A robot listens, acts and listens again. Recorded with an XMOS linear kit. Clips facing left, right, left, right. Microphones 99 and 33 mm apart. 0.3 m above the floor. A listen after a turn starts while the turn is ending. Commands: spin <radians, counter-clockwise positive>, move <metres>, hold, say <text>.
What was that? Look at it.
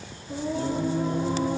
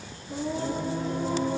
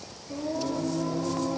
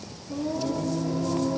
spin 0.52
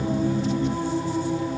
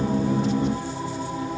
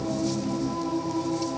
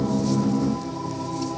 spin 2.27
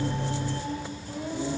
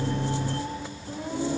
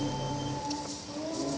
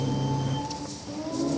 spin -0.70
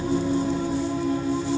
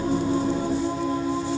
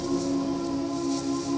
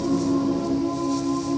spin -0.17
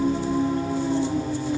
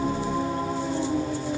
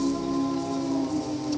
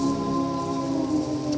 say Facing the singing.